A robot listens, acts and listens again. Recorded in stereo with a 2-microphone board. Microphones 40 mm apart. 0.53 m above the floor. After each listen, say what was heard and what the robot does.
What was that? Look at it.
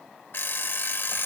The alarm clock: about 70° left or 110° left. Turn 70° left.
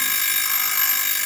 Facing the alarm clock, under 1 m away.